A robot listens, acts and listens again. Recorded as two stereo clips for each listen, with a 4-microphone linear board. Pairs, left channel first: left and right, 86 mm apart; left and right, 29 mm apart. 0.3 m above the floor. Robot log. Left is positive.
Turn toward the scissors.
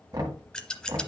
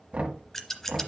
cmd yaw +30
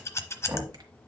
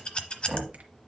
note: So it is at 140° left.
cmd yaw +140
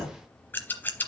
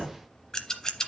note: The scissors is now 25° left.
cmd yaw +25
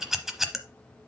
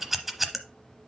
end: Facing the scissors.